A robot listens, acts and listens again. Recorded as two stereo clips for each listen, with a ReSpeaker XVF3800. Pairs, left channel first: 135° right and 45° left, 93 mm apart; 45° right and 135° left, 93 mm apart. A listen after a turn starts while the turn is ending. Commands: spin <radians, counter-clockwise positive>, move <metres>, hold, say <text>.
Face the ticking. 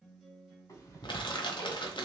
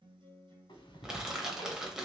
spin -1.40
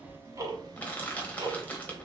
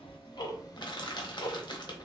say Facing the ticking, under 1 m away.